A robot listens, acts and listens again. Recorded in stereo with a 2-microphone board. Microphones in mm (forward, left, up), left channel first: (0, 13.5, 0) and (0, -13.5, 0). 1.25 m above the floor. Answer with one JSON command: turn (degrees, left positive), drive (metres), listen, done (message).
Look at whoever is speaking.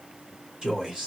{"turn": -30}
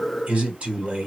{"turn": -115}
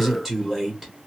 {"done": "Facing the man speaking."}